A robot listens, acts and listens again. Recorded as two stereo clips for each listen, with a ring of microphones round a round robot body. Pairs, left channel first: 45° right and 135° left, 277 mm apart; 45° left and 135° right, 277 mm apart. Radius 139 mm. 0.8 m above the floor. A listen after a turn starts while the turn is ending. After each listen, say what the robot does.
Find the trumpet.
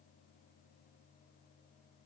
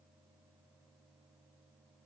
Keep listening.
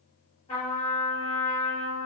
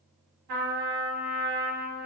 Turn 110° right.
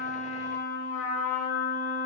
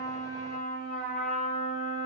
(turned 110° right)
Turn 15° left.
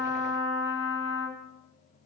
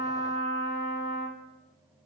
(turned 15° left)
Facing the trumpet.